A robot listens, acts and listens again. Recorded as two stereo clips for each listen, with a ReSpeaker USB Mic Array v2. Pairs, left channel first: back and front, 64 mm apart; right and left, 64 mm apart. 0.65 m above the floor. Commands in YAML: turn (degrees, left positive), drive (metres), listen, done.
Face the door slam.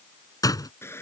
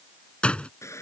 turn: -165
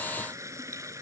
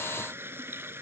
done: "Facing where the door slam came from. I can't hear it now."